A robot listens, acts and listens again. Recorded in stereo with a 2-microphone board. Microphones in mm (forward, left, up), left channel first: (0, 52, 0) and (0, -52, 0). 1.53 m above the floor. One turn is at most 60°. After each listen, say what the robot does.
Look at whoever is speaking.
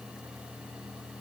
Keep listening.
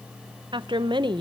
Turn 45° right.
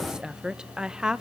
Turn 10° right.
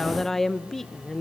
Facing the woman speaking, 1 to 2 m away.